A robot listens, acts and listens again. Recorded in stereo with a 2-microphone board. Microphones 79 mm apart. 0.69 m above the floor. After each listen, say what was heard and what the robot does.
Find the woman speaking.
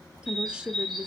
Turn 30° right.
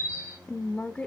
So it is at 20° left. Turn 20° left.
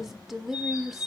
Found it: a woman speaking, straight ahead.